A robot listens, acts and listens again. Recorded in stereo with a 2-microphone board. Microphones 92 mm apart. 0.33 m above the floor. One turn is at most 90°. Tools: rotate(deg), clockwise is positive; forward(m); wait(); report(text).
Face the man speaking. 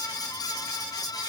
wait()
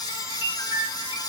wait()
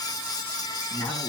rotate(-55)
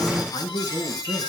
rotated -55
rotate(-55)
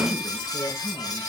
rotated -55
rotate(-25)
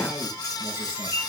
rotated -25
wait()
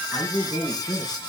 rotate(-10)
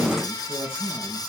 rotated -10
report("Facing the man speaking.")